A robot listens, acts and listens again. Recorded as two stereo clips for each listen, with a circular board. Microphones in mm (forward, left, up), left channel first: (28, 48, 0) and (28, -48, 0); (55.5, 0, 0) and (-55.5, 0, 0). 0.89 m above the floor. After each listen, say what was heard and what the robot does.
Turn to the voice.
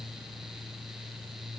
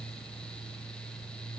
Keep listening.
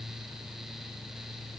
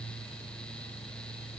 Keep listening.
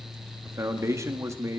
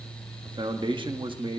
The man speaking: 145° right. Turn 145° right.
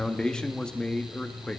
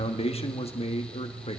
The man speaking is now 10° left. Turn 10° left.
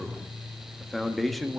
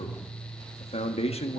Found it: a man speaking, straight ahead, 1 to 2 m away.